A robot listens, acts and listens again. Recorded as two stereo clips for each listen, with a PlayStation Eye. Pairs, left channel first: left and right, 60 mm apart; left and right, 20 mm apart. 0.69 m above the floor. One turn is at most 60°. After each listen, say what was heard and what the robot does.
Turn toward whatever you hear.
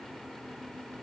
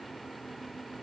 Keep listening.
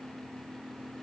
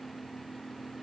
Keep listening.
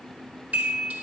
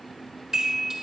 The chime: about 25° right or 155° right. Turn 25° right.
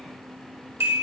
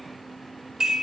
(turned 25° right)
So it is at 130° right. Turn 60° right.
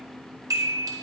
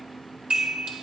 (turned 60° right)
The chime is now 90° right. Turn 60° right.
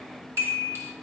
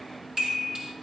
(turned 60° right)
The chime is now 50° right. Turn 50° right.
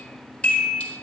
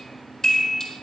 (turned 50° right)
The chime is now 20° left. Turn 20° left.
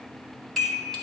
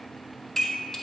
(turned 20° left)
Found it: a chime, straight ahead, 1 to 2 m away.